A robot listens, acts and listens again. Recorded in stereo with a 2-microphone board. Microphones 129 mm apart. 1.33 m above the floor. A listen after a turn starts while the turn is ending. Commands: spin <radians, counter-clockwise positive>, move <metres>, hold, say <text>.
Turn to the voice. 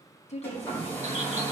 spin 0.96
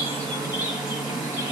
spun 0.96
hold
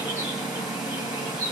hold
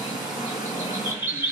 say I heard a woman speaking, but can't make it out now. It was about straight ahead or 70° left.